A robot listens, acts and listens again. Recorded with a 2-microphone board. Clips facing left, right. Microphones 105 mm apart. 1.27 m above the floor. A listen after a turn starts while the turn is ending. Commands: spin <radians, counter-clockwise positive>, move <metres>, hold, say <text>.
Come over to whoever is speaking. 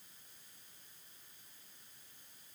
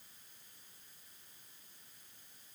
hold
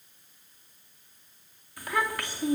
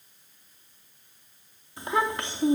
spin -0.44
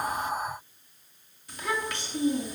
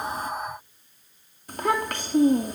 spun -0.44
spin -2.27
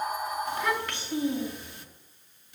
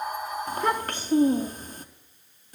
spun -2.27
spin -0.70
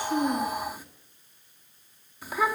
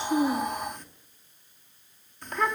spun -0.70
spin 0.17
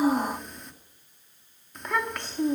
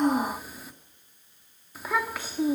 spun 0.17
move 1.0
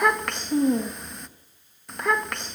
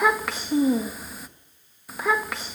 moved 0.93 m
move 1.0
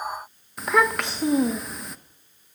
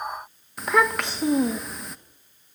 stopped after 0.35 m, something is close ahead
say Arrived at the child speaking, straight ahead.